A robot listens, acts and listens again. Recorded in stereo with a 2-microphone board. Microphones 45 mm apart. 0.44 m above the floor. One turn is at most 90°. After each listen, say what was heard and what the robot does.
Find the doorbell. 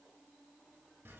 Keep listening.
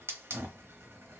Keep listening.
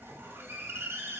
I can't make out a doorbell to turn to.